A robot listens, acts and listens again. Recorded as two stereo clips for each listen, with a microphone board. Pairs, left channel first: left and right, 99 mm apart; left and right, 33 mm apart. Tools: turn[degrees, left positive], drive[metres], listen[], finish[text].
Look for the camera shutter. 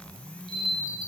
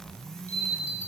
Thought: The camera shutter: about 50° left or 130° left.
Action: turn[50]
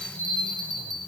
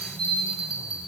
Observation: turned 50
Thought: So it is at 80° left.
Action: turn[80]
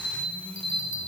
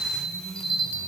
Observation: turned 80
Action: finish[Found it: a camera shutter, straight ahead.]